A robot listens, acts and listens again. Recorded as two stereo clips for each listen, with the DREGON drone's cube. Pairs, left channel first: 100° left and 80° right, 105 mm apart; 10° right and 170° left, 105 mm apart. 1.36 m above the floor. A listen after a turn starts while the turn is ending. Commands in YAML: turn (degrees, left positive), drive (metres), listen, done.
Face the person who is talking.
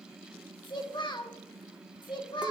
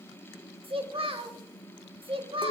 turn: 145
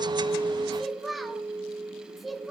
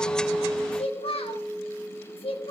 turn: 10
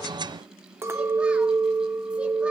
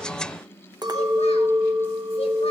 listen: true
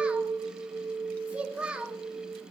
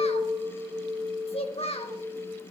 done: "Facing the child speaking."